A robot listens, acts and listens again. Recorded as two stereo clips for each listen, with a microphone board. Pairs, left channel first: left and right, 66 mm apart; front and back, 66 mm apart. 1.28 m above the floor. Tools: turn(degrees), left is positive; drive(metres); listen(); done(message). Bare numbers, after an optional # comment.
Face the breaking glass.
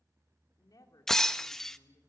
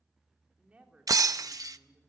# The breaking glass: 170° left.
turn(170)
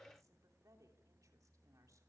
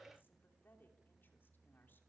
done("Facing where the breaking glass came from. I can't hear it now.")